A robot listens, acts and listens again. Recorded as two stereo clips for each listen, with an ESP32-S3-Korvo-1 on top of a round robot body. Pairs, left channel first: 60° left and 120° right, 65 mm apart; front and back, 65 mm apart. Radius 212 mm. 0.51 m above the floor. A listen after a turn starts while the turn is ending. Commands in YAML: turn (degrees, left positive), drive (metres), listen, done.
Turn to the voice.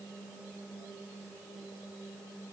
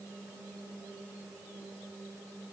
listen: true
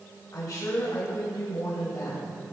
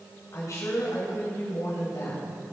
turn: 35
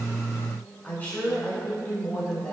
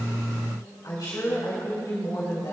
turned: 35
done: "Found it: a woman speaking, straight ahead, 2 to 4 m away."